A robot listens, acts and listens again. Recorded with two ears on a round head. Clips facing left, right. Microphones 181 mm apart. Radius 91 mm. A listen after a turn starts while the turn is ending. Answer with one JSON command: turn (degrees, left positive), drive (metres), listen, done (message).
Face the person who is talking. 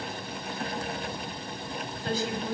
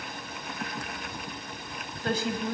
{"turn": -50}
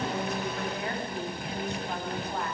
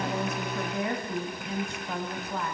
{"turn": -80}
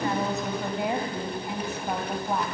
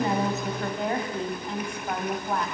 {"done": "Found it: a woman speaking, straight ahead, 2 to 4 m away."}